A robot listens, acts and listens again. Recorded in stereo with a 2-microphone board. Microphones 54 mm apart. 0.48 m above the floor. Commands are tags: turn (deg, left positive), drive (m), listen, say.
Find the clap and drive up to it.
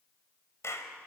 <turn deg="60"/>
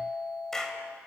<turn deg="10"/>
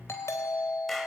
<listen/>
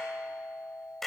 <drive m="1.0"/>
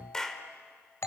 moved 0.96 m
<turn deg="15"/>
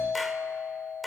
<drive m="1.0"/>
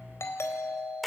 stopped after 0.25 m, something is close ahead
<say>Arrived at the clap, straight ahead.</say>